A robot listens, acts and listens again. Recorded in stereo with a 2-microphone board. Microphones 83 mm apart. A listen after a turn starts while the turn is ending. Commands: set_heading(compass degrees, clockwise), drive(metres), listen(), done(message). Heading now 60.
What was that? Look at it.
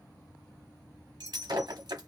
set_heading(130)
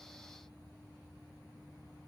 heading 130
listen()
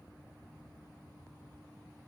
done("I heard breaking glass, but can't make it out now. It was about straight ahead or 40° right.")